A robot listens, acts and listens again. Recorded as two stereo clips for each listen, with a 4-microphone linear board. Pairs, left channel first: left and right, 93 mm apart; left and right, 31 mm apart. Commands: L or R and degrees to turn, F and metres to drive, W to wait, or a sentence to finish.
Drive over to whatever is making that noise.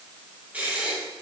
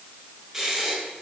R15
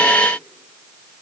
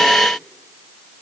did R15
W
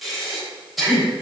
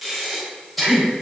F1.0
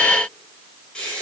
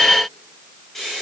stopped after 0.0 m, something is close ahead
L10
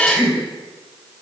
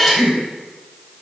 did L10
Blocked. The breathing is further on, straight ahead.